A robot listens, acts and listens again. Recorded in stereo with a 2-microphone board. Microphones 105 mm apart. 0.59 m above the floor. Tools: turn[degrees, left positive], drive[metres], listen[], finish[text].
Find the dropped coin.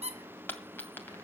Thought: The dropped coin: about 20° left or 160° left.
Action: turn[20]
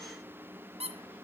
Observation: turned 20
Action: listen[]
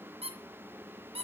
Action: finish[I heard a dropped coin, but can't make it out now. It was about straight ahead or 140° left.]